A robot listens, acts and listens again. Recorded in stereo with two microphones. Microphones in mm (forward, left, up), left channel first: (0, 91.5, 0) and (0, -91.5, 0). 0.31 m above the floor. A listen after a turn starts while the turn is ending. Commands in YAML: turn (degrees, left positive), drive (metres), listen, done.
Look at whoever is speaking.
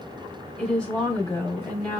turn: 30
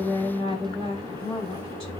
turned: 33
turn: 140
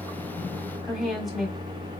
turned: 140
done: "Facing the woman speaking, 1 to 2 m away."